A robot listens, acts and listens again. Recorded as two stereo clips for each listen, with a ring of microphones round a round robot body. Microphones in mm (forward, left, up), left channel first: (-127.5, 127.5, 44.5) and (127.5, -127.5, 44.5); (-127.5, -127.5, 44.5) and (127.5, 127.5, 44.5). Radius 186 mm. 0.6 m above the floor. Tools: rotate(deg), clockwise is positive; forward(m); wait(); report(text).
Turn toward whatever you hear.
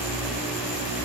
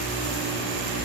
wait()
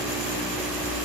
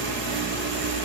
wait()
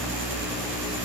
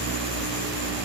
report("I can't make out anything to turn to.")